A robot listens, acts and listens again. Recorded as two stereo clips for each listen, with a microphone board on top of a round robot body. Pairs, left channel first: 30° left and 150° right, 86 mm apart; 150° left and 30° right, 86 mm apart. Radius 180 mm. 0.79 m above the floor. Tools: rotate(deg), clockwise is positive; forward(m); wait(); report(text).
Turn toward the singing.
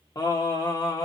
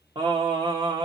report("Found it: singing, straight ahead, 1 to 2 m away.")